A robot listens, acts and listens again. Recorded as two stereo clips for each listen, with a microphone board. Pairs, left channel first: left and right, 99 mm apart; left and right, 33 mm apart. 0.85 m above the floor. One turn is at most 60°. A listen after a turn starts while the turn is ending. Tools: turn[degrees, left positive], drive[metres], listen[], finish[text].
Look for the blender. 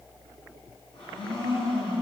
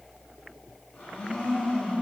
Thought: The blender: about 60° left or 120° left.
Action: turn[60]
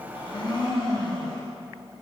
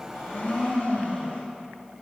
Thought: So it is at 50° left.
Action: turn[50]
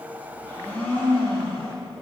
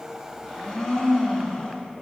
Thought: The blender is now 20° left.
Action: turn[20]
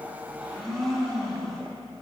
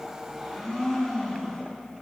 Action: finish[Facing the blender, 1 to 2 m away.]